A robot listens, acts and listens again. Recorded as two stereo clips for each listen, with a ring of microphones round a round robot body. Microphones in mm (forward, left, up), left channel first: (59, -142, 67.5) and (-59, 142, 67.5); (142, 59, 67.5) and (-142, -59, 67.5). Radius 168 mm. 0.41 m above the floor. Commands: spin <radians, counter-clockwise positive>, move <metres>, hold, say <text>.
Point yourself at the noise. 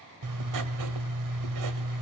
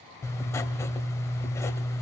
spin 1.83
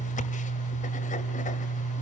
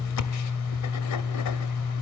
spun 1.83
say Facing the writing, 1 to 2 m away.